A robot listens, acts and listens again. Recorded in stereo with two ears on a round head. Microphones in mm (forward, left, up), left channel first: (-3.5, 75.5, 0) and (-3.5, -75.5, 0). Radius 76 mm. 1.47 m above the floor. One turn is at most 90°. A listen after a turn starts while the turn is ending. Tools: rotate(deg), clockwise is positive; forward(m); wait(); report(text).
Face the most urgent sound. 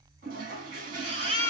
rotate(40)
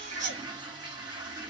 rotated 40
wait()
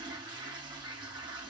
wait()
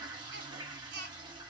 rotate(90)
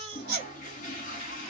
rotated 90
rotate(10)
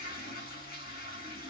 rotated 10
wait()
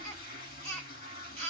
rotate(-10)
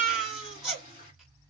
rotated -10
report("Facing the baby crying, 2 to 4 m away.")